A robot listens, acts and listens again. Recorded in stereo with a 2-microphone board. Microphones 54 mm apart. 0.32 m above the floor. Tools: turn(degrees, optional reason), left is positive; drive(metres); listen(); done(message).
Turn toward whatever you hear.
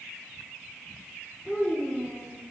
turn(degrees=15, reason="The child speaking: about 15° left or 165° left.")
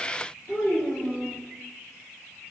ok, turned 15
turn(degrees=145, reason="So it is at 145° left.")
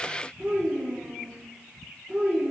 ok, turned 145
done("Facing the child speaking.")